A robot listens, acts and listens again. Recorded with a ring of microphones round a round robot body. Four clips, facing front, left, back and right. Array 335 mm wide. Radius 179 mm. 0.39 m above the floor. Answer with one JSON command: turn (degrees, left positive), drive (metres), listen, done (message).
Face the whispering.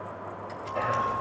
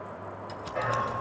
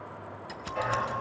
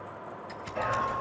{"turn": 45}
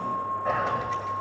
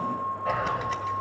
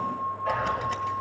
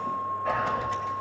{"turn": 20}
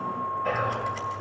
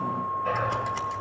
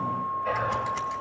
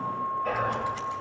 {"done": "Found it: whispering, straight ahead, 2 to 4 m away."}